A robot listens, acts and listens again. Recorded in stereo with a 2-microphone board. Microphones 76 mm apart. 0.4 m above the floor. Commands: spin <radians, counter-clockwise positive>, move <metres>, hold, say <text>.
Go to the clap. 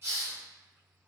hold
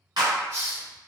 spin -1.22
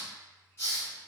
hold
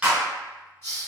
spin -0.35
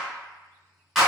move 1.0
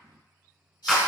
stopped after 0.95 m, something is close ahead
say I am next to the clap.